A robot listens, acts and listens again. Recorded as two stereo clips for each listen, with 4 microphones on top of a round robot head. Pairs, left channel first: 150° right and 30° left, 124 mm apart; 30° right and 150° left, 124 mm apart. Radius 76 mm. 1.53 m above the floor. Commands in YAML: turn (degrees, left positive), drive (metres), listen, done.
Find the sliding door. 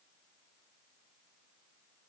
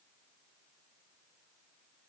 listen: true
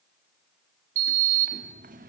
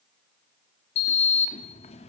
turn: 10
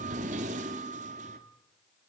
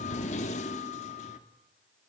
done: "Facing the sliding door."